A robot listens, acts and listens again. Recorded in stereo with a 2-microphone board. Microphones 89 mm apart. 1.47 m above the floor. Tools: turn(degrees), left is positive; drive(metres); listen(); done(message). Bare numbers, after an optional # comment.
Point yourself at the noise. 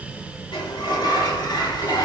# The sliding door: about 60° left or 120° left.
turn(60)
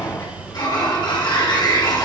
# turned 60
# So it is at 60° left.
turn(60)
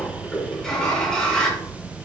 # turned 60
# The sliding door is now 10° left.
turn(10)
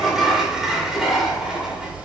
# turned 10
done("Facing the sliding door, 1 to 2 m away.")